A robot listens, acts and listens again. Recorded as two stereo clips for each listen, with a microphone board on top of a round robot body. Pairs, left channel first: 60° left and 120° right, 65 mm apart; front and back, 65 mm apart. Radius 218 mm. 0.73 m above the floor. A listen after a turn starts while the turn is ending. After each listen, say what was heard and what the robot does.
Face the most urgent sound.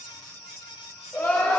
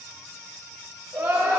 The crying: 120° left. Turn 120° left.
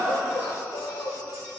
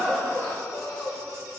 The crying is now 35° left. Turn 35° left.
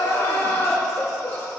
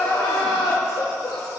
Found it: crying, straight ahead.